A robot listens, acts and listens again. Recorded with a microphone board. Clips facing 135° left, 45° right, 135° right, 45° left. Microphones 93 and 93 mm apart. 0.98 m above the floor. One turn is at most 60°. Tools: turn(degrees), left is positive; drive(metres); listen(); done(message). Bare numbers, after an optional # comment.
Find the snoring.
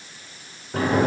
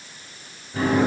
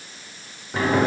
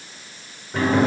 listen()
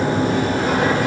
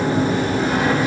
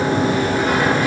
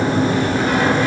listen()
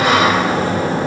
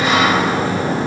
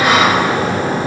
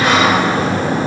done("I can't make out snoring, only a sliding door.")